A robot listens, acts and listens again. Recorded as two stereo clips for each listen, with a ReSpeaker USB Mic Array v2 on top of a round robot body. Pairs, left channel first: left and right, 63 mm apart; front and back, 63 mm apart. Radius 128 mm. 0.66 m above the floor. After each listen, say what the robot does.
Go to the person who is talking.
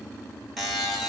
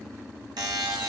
Keep listening.
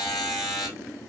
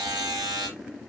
Keep listening.
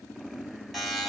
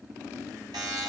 I can't make out anyone speaking to turn to.